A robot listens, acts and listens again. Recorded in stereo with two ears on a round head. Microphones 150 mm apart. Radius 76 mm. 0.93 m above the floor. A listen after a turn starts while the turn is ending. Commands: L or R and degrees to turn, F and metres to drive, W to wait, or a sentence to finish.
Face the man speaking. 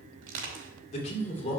L45
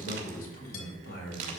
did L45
L100
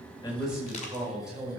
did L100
Found it: a man speaking, straight ahead.